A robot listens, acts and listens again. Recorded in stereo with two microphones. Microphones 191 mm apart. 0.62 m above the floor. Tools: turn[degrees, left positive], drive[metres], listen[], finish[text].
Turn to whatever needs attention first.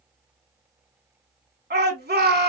Thought: The shout: about 60° right or 120° right.
Action: turn[-60]
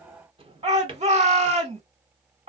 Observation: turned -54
Thought: So it is at 45° right.
Action: turn[-45]
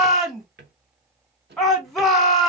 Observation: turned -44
Action: finish[Found it: a shout, straight ahead.]